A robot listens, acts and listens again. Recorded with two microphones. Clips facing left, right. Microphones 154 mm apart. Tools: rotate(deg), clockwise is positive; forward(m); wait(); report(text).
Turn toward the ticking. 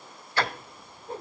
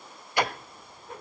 rotate(15)
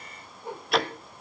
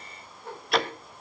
report("Facing the ticking.")